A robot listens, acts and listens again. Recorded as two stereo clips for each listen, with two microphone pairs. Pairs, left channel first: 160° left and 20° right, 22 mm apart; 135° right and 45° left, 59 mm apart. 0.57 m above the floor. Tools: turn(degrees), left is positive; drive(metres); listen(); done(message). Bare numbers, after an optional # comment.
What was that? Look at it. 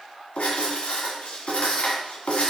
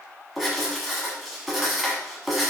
# The writing: 135° left.
turn(135)
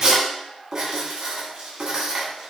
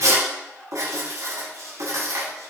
# The writing is now 25° left.
turn(25)
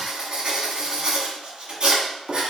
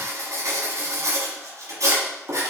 # The writing is now 20° left.
turn(20)
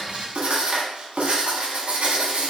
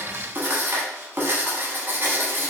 done("Found it: writing, straight ahead, 1 to 2 m away.")